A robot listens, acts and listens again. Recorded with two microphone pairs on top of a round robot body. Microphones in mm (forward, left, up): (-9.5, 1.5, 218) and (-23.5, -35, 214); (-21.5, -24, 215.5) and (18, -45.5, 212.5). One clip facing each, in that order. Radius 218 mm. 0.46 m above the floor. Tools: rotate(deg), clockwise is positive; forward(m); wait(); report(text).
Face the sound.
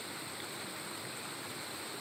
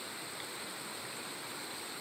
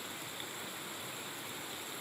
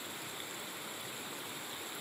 wait()
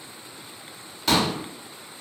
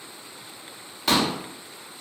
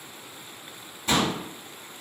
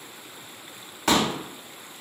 rotate(30)
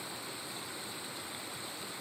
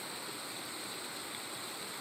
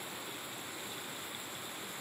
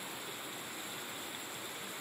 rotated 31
report("I heard a pop from this way, but can't make it out now.")